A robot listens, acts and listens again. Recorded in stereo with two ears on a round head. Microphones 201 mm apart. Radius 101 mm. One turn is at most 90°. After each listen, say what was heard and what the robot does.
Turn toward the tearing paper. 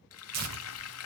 Turn 90° right.
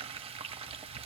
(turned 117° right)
Nothing new. It was at 25° left. Turn 25° left.
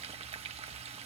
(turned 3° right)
Nothing new. It was at 30° left. Turn 30° left.
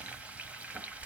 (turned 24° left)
Facing where the tearing paper came from. I can't hear it now.